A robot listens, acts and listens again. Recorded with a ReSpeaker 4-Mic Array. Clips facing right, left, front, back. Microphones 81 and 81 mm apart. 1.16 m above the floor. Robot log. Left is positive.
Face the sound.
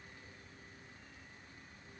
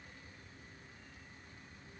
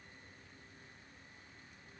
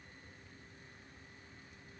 cmd idle
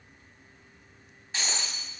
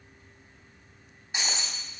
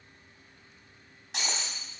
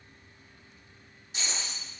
note: The breaking glass: 10° left.
cmd yaw +10
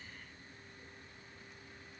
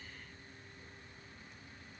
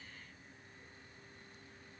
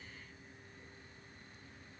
end: I heard breaking glass from this way, but can't make it out now.